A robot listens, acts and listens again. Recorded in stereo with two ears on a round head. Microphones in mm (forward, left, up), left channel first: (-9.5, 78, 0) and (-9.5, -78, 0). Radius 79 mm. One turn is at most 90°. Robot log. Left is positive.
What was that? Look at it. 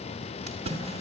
note: The splash: about 40° right or 140° right.
cmd yaw -40
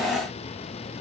cmd idle
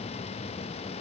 end: I heard a splash, but can't make it out now. It was about straight ahead or 100° right.